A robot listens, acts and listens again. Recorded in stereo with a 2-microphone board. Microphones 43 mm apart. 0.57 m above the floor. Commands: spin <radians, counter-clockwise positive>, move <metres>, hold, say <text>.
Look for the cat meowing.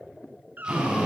spin -0.96
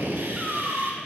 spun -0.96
say Found it: a cat meowing, straight ahead, 2 to 4 m away.